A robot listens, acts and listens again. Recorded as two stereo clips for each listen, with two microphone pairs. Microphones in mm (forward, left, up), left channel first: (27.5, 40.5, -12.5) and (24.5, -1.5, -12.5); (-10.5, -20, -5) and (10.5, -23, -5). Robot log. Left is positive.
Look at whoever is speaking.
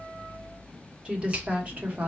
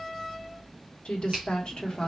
note: The woman speaking: 145° right.
cmd yaw -145
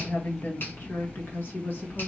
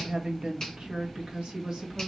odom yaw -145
note: The woman speaking is now 50° left.
cmd yaw +50
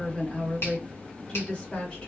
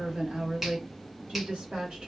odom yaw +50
note: The woman speaking is now 15° left.
cmd yaw +15
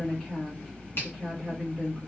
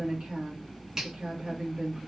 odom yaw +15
end: Found it: a woman speaking, straight ahead, 1 to 2 m away.